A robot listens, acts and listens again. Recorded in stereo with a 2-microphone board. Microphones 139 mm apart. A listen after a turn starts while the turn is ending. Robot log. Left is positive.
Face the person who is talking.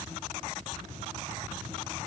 cmd idle
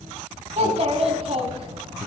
note: The child speaking: about 45° right or 135° right.
cmd yaw -45
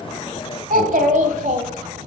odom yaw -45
note: So it is at 110° right.
cmd yaw -110
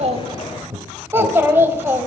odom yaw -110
note: The child speaking is now 15° right.
cmd yaw -15
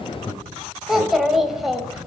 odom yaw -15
end: Facing the child speaking, 1 to 2 m away.